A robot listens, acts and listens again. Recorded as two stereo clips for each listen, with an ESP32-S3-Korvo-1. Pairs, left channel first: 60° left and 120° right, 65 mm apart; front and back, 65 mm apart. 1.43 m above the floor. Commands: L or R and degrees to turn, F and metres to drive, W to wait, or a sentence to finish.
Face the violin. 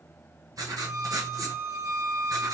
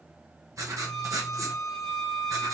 R90
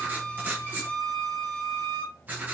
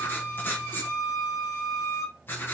R10
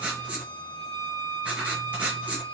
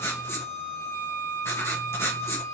Found it: a violin, straight ahead, 1 to 2 m away.